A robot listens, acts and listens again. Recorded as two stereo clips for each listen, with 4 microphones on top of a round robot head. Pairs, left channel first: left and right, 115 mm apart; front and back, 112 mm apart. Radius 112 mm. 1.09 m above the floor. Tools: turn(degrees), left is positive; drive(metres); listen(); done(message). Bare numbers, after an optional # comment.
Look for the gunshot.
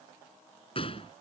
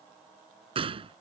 # The gunshot: 145° left.
turn(145)
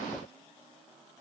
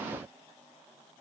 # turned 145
done("I heard a gunshot from this way, but can't make it out now.")